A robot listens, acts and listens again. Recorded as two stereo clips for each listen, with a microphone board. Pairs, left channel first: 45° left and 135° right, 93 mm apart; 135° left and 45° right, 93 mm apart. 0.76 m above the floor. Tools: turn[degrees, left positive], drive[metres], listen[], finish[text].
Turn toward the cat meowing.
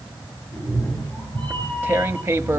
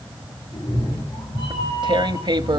Thought: The cat meowing: 120° left.
Action: turn[120]
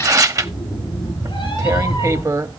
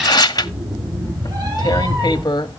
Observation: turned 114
Action: finish[Found it: a cat meowing, straight ahead, over 4 m away.]